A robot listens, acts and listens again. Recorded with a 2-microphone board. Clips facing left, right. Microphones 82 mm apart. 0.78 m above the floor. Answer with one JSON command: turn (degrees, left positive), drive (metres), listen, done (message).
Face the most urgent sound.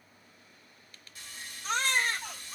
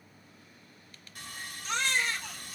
{"turn": 40}
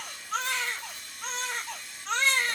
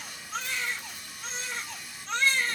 {"turn": 95}
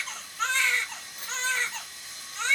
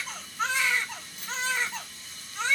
{"turn": -10}
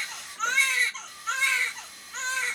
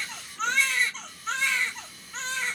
{"done": "Found it: a baby crying, straight ahead, under 1 m away."}